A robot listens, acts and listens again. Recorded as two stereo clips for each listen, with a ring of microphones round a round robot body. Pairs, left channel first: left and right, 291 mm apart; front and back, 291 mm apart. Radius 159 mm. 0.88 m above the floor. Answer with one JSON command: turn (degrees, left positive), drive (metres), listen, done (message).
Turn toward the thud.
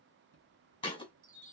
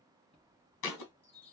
{"turn": 20}
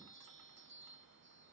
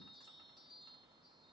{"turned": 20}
{"done": "Facing where the thud came from. I can't hear it now."}